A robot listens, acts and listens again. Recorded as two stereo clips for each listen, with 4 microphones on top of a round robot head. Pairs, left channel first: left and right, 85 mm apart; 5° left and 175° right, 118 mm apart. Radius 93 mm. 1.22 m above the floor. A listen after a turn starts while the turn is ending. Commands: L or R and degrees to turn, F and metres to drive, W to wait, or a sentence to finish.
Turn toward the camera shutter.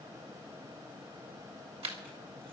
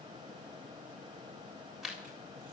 R90
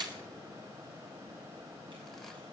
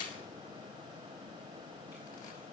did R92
W
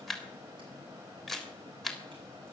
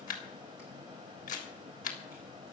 Facing the camera shutter, 2 to 4 m away.